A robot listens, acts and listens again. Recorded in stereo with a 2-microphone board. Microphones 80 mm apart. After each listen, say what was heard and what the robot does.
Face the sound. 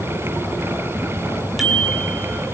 Turn 30° right.
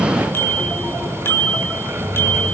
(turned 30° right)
So it is at 30° left. Turn 30° left.
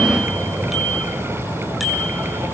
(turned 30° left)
Facing the bicycle bell.